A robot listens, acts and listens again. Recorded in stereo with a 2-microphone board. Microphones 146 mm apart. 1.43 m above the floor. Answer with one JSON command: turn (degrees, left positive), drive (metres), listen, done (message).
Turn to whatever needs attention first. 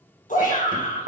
{"turn": 65}
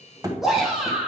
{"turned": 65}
{"done": "Facing the shout."}